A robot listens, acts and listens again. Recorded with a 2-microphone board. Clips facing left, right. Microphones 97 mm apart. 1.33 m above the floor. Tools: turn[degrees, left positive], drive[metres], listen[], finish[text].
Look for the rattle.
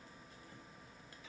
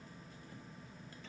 Action: listen[]
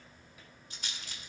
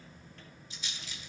Thought: The rattle: about 55° left or 125° left.
Action: turn[55]
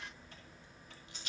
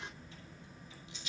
Thought: So it is at 60° left.
Action: turn[60]
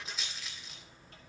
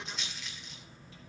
Action: finish[Facing the rattle.]